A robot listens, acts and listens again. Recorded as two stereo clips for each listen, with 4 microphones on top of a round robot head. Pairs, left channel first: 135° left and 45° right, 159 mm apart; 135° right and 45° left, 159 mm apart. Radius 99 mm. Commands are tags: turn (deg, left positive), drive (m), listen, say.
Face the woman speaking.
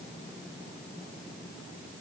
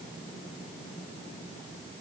<listen/>
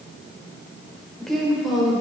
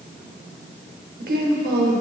<turn deg="45"/>
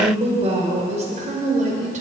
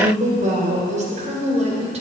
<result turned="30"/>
<say>Facing the woman speaking, 2 to 4 m away.</say>